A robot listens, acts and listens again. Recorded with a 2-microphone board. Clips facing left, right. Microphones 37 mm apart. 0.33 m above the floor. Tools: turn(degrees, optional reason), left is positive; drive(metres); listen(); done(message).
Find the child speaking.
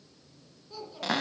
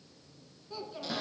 turn(degrees=-30)
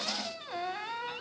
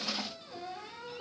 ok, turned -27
listen()
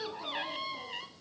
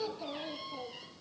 turn(degrees=-30)
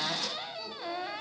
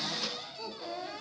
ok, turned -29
done("Facing the child speaking.")